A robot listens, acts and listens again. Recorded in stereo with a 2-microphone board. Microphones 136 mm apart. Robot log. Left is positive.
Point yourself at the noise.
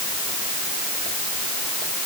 cmd idle
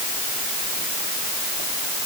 cmd idle
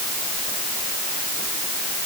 end: I can't make out anything to turn to.